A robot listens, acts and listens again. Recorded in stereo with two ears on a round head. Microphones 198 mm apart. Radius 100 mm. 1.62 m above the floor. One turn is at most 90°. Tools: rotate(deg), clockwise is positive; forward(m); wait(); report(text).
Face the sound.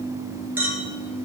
rotate(30)
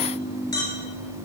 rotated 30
rotate(-20)
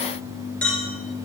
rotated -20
report("Found it: a clink, straight ahead.")